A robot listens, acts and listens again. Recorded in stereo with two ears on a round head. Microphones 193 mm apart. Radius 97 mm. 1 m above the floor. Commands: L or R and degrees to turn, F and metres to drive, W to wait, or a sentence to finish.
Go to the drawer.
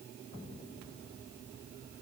W
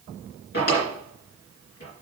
L50
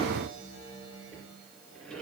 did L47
W
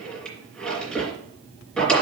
F1.0
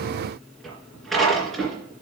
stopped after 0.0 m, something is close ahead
Blocked. The drawer is further on, straight ahead.